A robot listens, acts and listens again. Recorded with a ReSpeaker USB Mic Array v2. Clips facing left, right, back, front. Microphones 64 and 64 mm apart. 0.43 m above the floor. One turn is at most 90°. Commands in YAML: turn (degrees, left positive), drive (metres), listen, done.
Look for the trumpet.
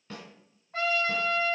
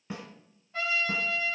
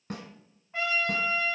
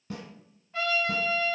turn: 90
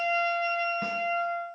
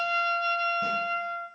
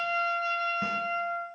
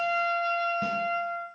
turn: 25
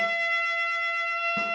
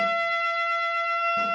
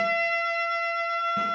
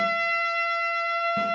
done: "Facing the trumpet, under 1 m away."